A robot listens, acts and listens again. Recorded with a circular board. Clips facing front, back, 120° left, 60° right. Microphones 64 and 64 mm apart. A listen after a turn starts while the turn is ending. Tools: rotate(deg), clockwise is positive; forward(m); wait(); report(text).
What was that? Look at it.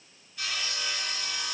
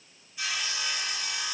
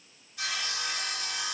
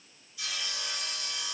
rotate(-105)
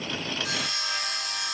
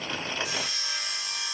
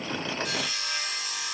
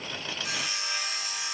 rotate(-15)
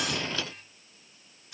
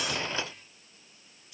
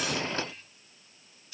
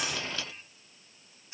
report("Found it: sawing, straight ahead.")